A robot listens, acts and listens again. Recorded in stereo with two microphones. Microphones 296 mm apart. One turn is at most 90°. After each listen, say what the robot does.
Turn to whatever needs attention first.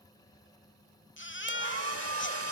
Turn 40° left.
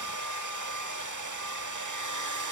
Keep listening.
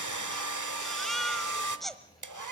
Facing the baby crying.